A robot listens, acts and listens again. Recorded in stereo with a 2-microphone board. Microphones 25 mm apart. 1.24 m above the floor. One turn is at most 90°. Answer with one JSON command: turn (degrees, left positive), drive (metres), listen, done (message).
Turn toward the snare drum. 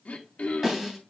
{"turn": -15}
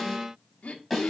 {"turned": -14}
{"done": "Found it: a snare drum, straight ahead."}